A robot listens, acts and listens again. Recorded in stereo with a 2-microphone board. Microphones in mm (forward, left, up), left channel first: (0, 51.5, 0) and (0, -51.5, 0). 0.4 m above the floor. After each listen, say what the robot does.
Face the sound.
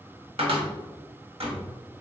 Turn 70° right.
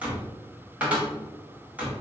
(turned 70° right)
Turn 15° right.
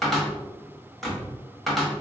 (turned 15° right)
Facing the cupboard door.